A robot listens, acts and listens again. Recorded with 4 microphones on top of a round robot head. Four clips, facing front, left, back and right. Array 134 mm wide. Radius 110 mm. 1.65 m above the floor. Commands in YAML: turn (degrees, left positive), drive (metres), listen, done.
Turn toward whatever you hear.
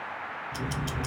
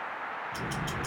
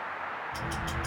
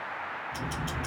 done: "Facing the ticking."